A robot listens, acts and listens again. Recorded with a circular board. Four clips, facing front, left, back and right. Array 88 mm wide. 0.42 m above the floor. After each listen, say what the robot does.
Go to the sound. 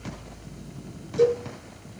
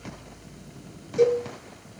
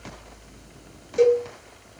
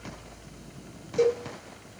Turn 175° right.
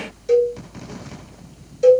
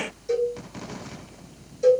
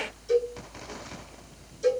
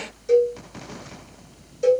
Turn 20° right.
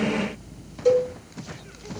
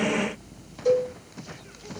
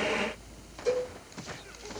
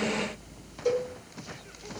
Turn 10° right.
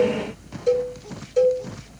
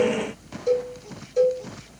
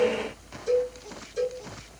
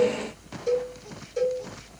Drive 1.0 m forward.
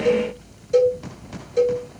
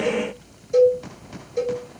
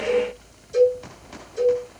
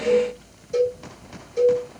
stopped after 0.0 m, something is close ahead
Something is in my way. I am facing the cowbell but have not reached it.